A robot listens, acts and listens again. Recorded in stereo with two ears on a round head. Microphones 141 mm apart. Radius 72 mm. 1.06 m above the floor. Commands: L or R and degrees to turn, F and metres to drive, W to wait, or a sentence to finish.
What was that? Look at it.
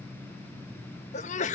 L45
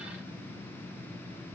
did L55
W
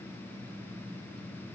I heard a sneeze, but can't make it out now. It was about 10° right or 80° left.